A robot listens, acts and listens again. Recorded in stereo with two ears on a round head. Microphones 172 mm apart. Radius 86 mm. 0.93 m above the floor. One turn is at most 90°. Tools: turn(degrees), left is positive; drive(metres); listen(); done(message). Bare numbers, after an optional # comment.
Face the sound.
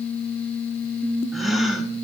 turn(30)
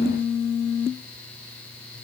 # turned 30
listen()
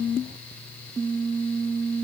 done("I heard a gasp, but can't make it out now. It was about 30° right or 150° left.")